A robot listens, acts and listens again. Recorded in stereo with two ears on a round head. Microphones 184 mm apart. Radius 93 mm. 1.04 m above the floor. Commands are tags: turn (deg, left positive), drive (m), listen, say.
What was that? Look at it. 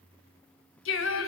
<turn deg="70"/>
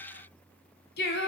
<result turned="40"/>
<turn deg="55"/>
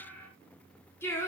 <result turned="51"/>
<turn deg="10"/>
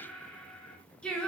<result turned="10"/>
<say>Facing the singing.</say>